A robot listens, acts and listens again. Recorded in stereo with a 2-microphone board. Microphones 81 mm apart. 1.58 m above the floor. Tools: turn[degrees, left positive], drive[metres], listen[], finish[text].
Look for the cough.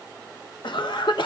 Thought: The cough: about 75° left or 105° left.
Action: turn[75]
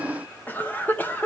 Thought: So it is at 25° left.
Action: turn[25]
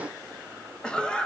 Thought: The cough is now 10° left.
Action: turn[10]
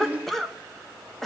Action: finish[Facing the cough.]